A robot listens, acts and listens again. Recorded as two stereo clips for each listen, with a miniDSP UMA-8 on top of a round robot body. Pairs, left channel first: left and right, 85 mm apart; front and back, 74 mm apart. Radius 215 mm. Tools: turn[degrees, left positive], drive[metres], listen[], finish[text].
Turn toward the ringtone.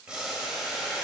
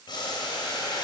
Action: listen[]
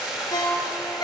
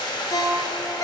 Thought: The ringtone: 40° left.
Action: turn[40]
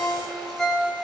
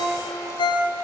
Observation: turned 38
Action: finish[Facing the ringtone.]